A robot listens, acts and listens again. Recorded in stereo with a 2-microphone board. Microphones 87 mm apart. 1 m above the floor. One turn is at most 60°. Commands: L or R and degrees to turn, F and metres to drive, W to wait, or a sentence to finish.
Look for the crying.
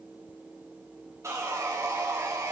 W
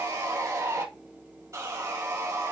W
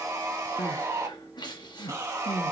L60
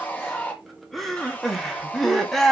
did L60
Facing the crying.